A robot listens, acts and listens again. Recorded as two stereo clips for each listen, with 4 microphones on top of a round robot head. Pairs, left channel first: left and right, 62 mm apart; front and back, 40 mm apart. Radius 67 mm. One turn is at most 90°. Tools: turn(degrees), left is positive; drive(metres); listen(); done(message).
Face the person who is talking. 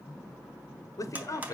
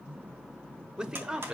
turn(degrees=90)
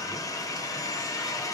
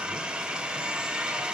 turn(degrees=20)
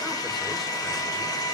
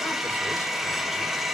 listen()
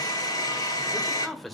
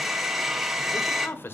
done("Facing the man speaking, 1 to 2 m away.")